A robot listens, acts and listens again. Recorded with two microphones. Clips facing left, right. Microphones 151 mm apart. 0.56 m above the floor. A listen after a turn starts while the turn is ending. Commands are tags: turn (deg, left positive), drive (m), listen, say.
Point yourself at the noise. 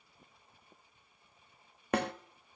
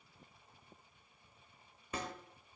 <turn deg="70"/>
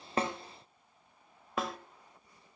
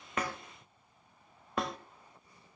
<say>Facing the snare drum.</say>